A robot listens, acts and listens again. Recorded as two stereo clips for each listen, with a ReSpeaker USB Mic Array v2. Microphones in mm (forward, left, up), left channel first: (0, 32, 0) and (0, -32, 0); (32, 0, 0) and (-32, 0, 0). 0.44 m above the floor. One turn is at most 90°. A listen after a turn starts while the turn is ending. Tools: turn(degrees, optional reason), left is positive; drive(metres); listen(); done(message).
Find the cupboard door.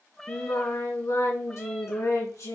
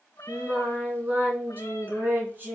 listen()
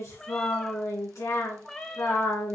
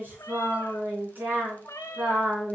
listen()
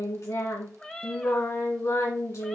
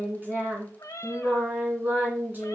done("I can't make out a cupboard door to turn to.")